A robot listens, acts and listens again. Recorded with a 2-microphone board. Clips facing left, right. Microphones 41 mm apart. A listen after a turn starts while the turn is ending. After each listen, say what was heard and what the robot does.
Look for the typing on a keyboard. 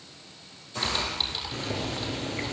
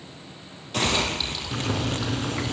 Turn 30° left.
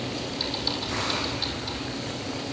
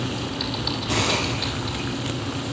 Keep listening.
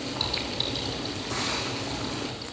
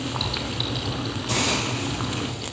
Keep listening.
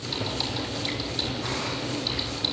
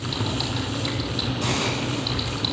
I heard typing on a keyboard, but can't make it out now. It was about 20° right or 140° left.